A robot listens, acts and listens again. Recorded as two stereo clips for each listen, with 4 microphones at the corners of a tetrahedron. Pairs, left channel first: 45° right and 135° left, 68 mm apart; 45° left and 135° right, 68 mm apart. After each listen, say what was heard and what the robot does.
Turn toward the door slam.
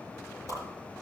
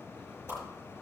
Keep listening.
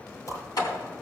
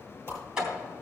The door slam: 55° right. Turn 55° right.
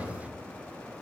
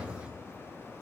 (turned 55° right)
Facing the door slam.